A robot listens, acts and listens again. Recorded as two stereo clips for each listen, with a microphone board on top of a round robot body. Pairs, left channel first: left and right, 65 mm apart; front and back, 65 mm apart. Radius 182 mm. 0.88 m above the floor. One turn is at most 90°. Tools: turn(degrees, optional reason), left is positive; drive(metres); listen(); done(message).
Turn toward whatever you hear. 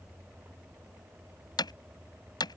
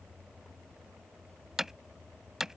turn(degrees=90, reason="The hammering: 95° left.")
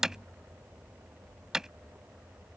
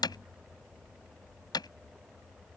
turn(degrees=-10, reason="The hammering is now 10° right.")
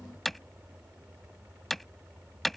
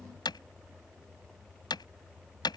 done("Found it: hammering, straight ahead.")